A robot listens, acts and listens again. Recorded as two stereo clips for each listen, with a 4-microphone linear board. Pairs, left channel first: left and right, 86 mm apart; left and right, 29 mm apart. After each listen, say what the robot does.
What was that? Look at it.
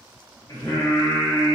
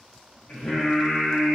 Turn 40° left.
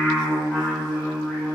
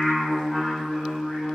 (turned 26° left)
Found it: singing, straight ahead, 1 to 2 m away.